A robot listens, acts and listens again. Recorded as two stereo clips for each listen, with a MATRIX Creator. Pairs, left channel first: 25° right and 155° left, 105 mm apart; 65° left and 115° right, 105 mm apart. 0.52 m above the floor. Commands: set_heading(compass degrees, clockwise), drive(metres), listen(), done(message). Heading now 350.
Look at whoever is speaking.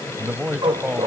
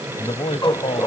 set_heading(270)
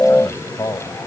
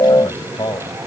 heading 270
set_heading(240)
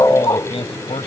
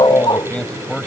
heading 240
set_heading(250)
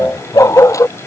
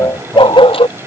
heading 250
listen()
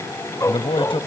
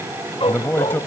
done("Found it: a man speaking, straight ahead.")